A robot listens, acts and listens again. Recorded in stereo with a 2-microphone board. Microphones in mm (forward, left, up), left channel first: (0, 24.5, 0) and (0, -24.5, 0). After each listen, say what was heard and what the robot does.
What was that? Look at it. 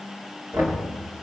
The knocking: about 70° right or 110° right. Turn 70° right.
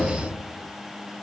Keep listening.
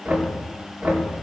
So it is at 35° right. Turn 35° right.
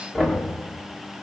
The knocking is now 10° left. Turn 10° left.
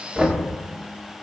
Found it: knocking, straight ahead, 2 to 4 m away.